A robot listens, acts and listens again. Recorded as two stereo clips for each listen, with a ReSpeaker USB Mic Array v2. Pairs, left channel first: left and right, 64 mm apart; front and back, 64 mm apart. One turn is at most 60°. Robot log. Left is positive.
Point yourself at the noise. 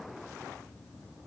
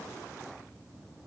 cmd idle
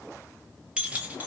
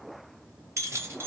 note: The keys jangling: 145° right.
cmd yaw -60
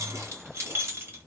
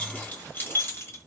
note: The keys jangling is now 45° right.
cmd yaw -45
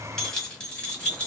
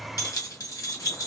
note: The keys jangling is now 20° left.
cmd yaw +20
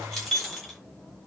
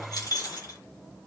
end: Facing the keys jangling.